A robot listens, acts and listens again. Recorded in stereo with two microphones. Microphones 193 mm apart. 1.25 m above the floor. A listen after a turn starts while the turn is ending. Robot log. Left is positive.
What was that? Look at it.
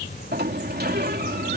note: The sliding door: about 55° right or 125° right.
cmd yaw -55
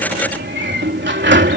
note: So it is at 70° right.
cmd yaw -70
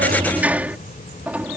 note: The sliding door is now 10° right.
cmd yaw -10
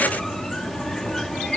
end: Found it: a sliding door, straight ahead.